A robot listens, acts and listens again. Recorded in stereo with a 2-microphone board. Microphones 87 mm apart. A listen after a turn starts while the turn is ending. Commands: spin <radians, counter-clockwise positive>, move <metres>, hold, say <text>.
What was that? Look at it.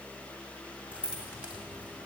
spin -0.26
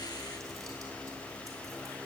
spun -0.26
hold
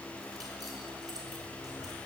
hold
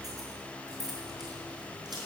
spin -2.27
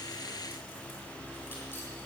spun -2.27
hold
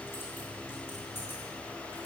spin 0.44
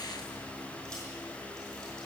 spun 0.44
hold
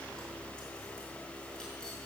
hold
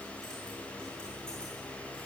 say I heard keys jangling from this way, but can't make it out now.